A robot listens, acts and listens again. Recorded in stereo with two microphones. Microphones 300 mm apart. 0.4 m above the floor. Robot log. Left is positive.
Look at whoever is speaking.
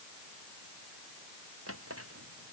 cmd idle
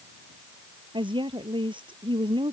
note: The woman speaking: about 15° right or 165° right.
cmd yaw -15
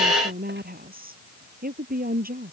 note: So it is at 150° right.
cmd yaw -150
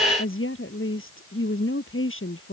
note: The woman speaking is now 45° left.
cmd yaw +45
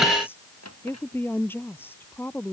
end: Facing the woman speaking.